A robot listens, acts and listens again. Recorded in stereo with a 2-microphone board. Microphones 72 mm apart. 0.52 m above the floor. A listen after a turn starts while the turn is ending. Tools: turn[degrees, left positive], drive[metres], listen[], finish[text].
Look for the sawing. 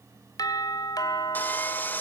Thought: The sawing: about 25° left or 155° left.
Action: turn[25]
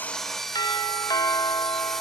Action: finish[Found it: sawing, straight ahead.]